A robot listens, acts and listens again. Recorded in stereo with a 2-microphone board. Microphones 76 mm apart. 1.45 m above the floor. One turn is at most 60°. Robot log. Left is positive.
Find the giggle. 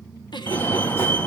note: The giggle: about 75° left or 105° left.
cmd yaw +60
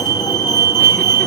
cmd idle
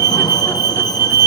cmd idle
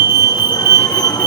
end: I heard a giggle, but can't make it out now. It was about 15° left or 45° left.